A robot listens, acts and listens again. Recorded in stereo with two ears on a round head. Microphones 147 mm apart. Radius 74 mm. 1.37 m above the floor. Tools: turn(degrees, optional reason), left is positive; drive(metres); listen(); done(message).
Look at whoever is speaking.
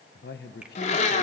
turn(degrees=65, reason="The man speaking: about 65° left or 115° left.")
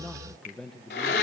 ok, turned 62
done("Facing the man speaking.")